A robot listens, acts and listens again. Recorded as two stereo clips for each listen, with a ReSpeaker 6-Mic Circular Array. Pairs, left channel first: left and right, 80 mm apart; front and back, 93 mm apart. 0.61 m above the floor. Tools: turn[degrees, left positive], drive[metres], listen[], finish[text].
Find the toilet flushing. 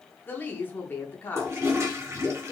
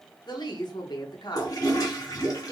Thought: The toilet flushing: 40° right.
Action: turn[-40]
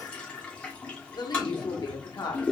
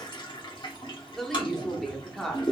Thought: The toilet flushing is now 15° left.
Action: turn[15]
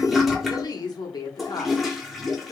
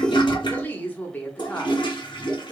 Action: finish[Facing the toilet flushing, 1 to 2 m away.]